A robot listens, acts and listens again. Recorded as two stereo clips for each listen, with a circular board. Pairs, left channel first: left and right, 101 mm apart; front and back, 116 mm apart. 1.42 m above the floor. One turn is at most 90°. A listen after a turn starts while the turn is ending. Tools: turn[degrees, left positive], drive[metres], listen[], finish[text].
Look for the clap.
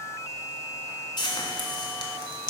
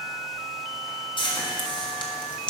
Action: listen[]
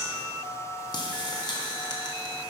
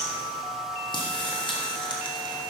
Action: listen[]
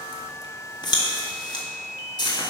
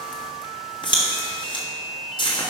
Action: finish[I can't make out a clap, only frying.]